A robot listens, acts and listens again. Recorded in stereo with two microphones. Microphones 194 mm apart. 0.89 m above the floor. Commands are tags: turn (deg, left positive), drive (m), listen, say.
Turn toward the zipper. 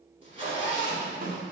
<turn deg="-30"/>
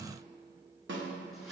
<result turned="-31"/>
<listen/>
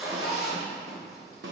<say>Facing the zipper, 2 to 4 m away.</say>